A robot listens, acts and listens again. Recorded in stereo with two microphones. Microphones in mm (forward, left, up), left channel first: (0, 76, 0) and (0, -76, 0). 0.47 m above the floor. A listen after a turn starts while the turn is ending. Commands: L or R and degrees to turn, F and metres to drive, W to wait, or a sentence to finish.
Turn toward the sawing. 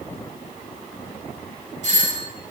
W
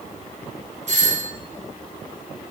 W
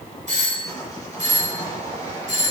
L25
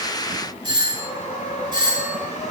L130
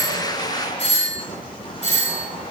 L35
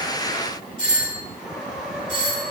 Found it: sawing, straight ahead, over 4 m away.